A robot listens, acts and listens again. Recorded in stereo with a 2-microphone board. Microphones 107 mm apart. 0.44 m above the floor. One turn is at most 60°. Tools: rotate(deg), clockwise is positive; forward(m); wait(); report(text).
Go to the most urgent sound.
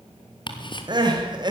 rotate(45)
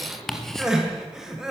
forward(1.0)
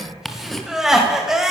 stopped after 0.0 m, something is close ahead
report("Blocked. The crying is further on, straight ahead.")